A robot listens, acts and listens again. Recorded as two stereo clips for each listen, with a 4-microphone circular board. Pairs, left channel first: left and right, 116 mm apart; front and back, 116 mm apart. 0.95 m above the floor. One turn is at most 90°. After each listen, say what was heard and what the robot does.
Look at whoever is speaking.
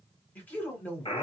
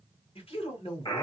The man speaking: 15° left. Turn 15° left.
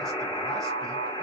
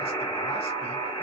Keep listening.
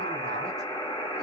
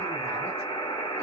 Keep listening.
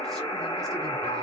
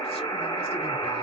Facing where the man speaking came from. I can't hear it now.